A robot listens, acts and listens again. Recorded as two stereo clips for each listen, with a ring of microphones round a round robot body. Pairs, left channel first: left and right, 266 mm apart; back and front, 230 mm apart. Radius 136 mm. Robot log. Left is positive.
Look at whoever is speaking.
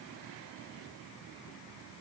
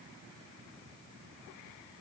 cmd idle
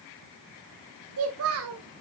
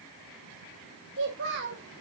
note: The child speaking: 50° right.
cmd yaw -50
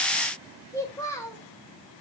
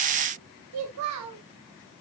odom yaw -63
note: The child speaking is now 10° left.
cmd yaw +10
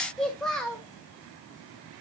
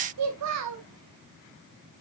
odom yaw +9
end: Found it: a child speaking, straight ahead.